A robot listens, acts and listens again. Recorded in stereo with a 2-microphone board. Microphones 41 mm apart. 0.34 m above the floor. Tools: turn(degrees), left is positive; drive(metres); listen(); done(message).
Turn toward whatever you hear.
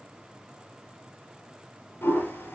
turn(degrees=70)
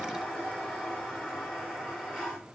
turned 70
done("Facing the toilet flushing.")